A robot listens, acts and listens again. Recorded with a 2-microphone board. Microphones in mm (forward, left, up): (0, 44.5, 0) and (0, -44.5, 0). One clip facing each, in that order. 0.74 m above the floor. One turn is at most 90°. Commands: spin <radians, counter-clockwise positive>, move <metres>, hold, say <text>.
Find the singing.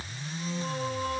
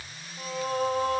spin -0.96
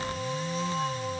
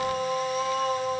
spin -1.22
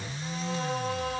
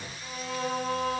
say Found it: singing, straight ahead, over 4 m away.